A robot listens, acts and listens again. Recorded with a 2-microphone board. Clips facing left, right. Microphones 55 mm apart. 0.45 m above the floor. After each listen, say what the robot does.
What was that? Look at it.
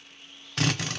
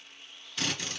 Turn 75° left.
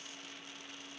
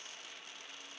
Keep listening.
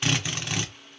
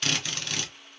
Turn 20° left.
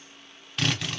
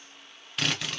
Facing the drill, under 1 m away.